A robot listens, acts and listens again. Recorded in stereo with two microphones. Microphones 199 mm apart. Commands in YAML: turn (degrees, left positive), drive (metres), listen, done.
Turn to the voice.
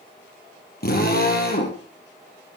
listen: true
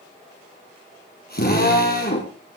listen: true
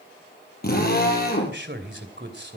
turn: -65
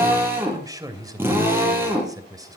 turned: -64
turn: -20
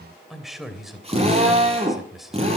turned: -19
done: "Found it: a man speaking, straight ahead, 2 to 4 m away."